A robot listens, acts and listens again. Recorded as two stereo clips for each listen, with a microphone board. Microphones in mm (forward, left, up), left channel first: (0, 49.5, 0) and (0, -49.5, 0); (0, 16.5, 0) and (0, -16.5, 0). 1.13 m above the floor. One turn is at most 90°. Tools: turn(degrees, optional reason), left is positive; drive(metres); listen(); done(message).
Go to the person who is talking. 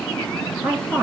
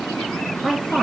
turn(degrees=-15, reason="The woman speaking: about 15° right or 165° right.")
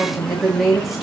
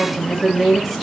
drive(metres=1.0)
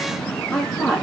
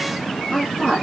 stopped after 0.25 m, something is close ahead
done("Something is in my way. I am facing the woman speaking but have not reached it.")